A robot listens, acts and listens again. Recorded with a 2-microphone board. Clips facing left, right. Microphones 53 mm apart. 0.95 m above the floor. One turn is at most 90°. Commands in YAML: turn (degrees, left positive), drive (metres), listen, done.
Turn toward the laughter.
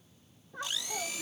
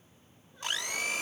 turn: 90
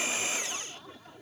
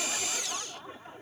turn: -30
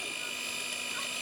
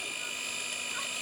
listen: true
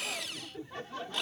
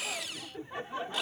turn: -25
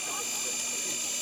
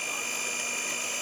listen: true
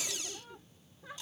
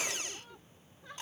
done: "Found it: laughter, straight ahead."